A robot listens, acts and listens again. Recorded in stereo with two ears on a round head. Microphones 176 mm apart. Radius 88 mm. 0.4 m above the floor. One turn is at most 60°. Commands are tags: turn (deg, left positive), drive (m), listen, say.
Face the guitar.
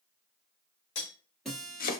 <turn deg="30"/>
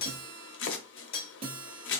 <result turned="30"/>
<turn deg="-30"/>
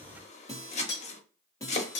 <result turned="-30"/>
<turn deg="15"/>
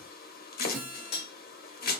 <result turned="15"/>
<say>Found it: a guitar, straight ahead.</say>